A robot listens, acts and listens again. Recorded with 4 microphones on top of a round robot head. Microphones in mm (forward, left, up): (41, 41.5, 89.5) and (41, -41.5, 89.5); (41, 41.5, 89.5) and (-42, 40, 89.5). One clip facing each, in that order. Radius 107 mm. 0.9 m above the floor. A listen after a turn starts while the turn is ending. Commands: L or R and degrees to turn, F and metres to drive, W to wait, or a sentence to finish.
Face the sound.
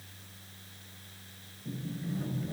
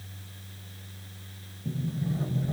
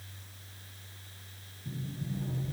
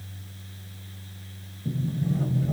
R155
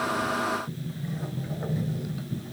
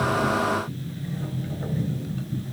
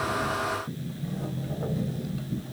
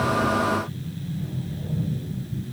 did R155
L10
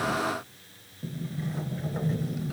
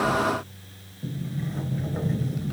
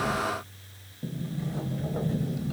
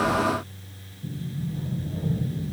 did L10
Facing the sliding door.